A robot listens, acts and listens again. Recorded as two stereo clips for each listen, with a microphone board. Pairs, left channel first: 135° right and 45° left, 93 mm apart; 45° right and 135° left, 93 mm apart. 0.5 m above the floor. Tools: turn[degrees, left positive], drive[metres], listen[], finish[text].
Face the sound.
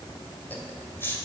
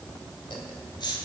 Thought: The laughter: 70° right.
Action: turn[-70]
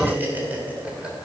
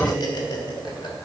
Thought: The laughter is now 30° right.
Action: turn[-30]
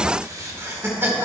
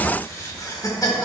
Thought: The laughter is now 15° right.
Action: turn[-15]
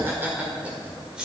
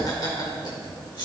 Thought: The laughter is now 35° right.
Action: turn[-35]
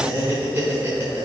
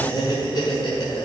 Thought: The laughter is now 15° right.
Action: turn[-15]
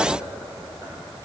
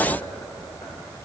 Action: finish[Facing the laughter, 1 to 2 m away.]